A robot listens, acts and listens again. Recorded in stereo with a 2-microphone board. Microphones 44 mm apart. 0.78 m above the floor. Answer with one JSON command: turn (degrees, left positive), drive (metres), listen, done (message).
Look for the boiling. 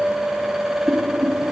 {"turn": -30}
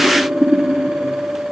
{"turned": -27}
{"turn": 15}
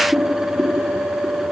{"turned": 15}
{"done": "Facing the boiling, 2 to 4 m away."}